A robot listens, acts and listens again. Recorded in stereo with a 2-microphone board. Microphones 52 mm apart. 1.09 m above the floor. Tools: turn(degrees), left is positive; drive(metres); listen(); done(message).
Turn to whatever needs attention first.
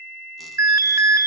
turn(degrees=-90)
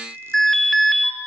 done("Facing the alarm.")